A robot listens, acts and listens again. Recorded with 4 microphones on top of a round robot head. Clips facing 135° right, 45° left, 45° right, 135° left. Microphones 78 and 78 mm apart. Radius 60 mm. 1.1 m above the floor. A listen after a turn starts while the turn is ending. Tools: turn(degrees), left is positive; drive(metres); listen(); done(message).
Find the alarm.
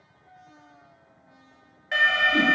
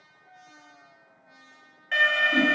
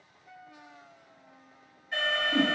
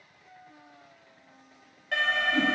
turn(degrees=145)
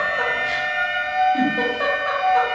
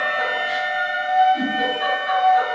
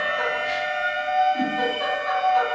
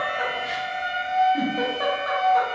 done("Facing the alarm, 1 to 2 m away.")